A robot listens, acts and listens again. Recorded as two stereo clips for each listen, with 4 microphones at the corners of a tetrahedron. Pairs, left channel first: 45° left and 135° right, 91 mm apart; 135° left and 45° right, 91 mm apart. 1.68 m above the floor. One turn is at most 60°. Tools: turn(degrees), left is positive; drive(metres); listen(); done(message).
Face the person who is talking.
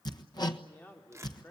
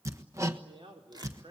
turn(degrees=-25)
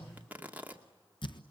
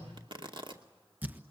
listen()
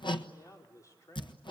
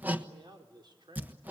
turn(degrees=-10)
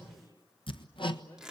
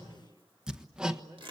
listen()
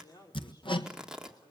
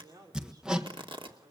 done("Facing the man speaking, over 4 m away.")